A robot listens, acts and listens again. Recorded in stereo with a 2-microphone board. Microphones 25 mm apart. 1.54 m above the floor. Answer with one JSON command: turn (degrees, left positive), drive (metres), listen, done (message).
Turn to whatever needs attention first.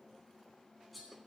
{"listen": true}
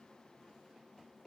{"listen": true}
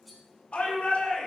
{"turn": 55}
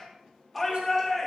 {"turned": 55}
{"done": "Found it: a shout, straight ahead."}